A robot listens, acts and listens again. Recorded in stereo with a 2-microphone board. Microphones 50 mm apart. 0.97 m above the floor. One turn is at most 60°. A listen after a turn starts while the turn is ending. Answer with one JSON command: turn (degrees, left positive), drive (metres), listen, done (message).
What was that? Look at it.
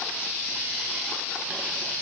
{"listen": true}
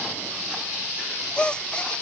{"turn": 20}
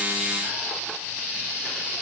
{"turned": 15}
{"listen": true}
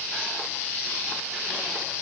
{"done": "I heard a gasp, but can't make it out now. It was about 5° left or 145° left."}